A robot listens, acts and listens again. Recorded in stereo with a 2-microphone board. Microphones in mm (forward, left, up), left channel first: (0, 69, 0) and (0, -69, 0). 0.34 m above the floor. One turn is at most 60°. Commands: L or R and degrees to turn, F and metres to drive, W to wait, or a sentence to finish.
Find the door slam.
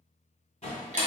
L55
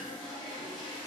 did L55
W
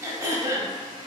I heard a door slam, but can't make it out now. It was about straight ahead or 70° left.